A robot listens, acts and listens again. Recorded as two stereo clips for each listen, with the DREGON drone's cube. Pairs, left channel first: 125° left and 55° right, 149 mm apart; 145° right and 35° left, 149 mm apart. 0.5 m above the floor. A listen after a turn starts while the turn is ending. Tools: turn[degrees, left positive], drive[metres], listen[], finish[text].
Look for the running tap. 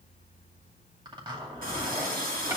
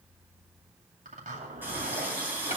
Thought: The running tap: 40° right.
Action: turn[-40]
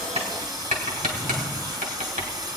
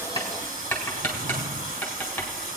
Thought: The running tap is now 10° left.
Action: turn[10]
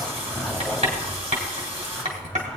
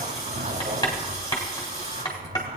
Action: finish[Found it: a running tap, straight ahead, 2 to 4 m away.]